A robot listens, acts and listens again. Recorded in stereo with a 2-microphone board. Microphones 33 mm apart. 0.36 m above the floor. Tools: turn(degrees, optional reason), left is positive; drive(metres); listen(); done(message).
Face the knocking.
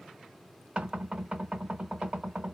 turn(degrees=-35, reason="The knocking: about 35° right or 145° right.")
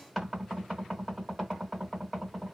done("Found it: knocking, straight ahead, 1 to 2 m away.")